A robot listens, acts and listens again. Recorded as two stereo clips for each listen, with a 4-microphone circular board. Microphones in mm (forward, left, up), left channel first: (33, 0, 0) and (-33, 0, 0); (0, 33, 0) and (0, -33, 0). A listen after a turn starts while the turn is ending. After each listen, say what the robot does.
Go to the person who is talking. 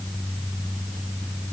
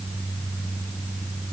Keep listening.
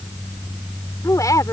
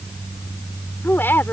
Turn 30° left.
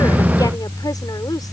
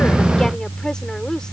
Turn 10° left.
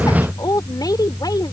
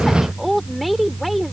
Drive 1.0 m forward.
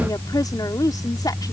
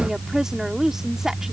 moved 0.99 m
Turn 10° right.
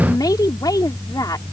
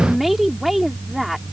Drive 1.0 m forward.
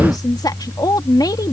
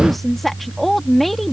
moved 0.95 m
Drive 1.0 m forward.
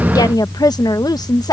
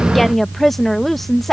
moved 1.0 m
Drive 1.0 m forward.
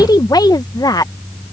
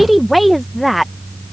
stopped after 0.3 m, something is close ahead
Arrived at the woman speaking, straight ahead.